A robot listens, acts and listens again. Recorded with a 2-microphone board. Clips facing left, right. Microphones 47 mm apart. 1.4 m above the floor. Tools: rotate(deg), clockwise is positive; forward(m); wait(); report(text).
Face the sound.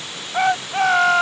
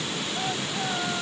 rotate(-65)
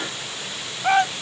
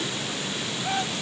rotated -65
rotate(-50)
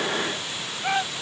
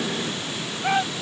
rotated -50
report("Facing the shout.")